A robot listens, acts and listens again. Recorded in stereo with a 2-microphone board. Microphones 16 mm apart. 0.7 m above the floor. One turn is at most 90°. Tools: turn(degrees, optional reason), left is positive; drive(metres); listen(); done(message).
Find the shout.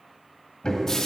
listen()
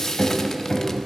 listen()
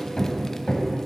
done("I can't make out a shout, only hammering and frying.")